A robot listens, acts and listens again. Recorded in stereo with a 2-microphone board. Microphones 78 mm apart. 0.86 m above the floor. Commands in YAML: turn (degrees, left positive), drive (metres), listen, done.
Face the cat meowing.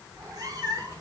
turn: -45
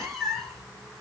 done: "Facing the cat meowing."